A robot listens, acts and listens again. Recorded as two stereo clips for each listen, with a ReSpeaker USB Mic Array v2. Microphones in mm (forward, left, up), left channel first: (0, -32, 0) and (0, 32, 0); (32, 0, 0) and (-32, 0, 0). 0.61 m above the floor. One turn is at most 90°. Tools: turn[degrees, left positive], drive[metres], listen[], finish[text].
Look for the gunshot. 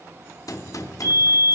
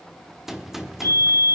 Thought: The gunshot: 95° right.
Action: turn[-90]
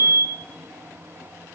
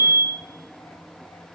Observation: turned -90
Action: finish[Facing where the gunshot came from. I can't hear it now.]